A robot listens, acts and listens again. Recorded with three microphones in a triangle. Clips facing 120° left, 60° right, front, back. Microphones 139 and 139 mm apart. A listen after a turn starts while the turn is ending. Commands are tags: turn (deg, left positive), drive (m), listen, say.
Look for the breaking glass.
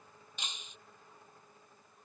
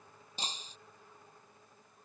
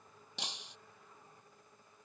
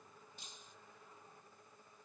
<say>Facing the breaking glass.</say>